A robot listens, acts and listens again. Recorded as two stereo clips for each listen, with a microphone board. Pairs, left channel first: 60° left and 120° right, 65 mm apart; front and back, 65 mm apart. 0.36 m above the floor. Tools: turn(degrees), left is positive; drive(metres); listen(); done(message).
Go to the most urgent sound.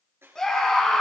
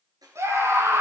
turn(degrees=140)
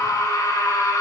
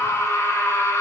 turn(degrees=40)
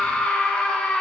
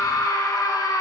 turn(degrees=-10)
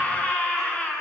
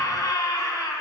drive(metres=1.0)
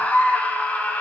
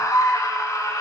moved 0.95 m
drive(metres=1.0)
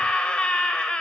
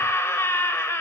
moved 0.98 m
drive(metres=1.0)
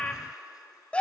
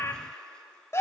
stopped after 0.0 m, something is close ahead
done("I am next to the scream.")